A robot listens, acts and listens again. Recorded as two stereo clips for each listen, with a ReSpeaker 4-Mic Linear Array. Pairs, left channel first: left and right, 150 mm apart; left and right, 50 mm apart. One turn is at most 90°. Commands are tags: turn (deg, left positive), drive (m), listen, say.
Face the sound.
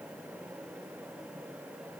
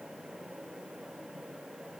<listen/>
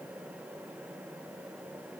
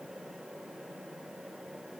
<listen/>
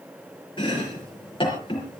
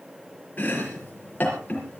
<turn deg="35"/>
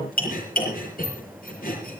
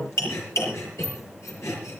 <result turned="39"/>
<turn deg="90"/>
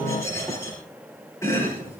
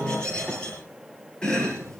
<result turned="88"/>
<turn deg="20"/>
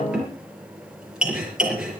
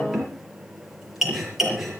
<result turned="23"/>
<say>Found it: chopping, straight ahead.</say>